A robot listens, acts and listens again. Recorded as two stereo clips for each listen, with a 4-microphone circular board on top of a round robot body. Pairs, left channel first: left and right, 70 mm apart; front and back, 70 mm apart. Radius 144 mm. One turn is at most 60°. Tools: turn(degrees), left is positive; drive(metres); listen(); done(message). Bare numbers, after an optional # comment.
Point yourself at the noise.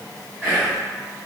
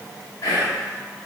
# The whispering: 20° left.
turn(20)
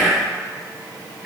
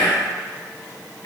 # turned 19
done("Found it: whispering, straight ahead.")